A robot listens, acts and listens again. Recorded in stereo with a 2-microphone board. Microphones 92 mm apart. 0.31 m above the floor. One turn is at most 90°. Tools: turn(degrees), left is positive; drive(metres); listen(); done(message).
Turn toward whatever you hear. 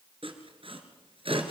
turn(degrees=-70)
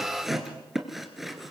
done("Facing the sawing.")